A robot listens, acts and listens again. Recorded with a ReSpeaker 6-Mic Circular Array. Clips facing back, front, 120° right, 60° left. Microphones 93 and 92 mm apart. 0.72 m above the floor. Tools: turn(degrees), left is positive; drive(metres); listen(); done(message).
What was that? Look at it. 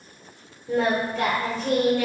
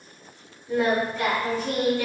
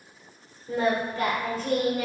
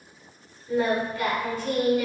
turn(degrees=-175)
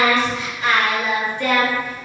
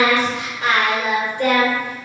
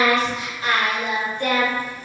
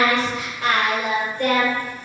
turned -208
turn(degrees=35)
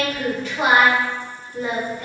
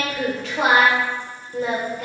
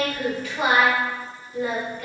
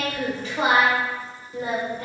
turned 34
done("Found it: singing, straight ahead.")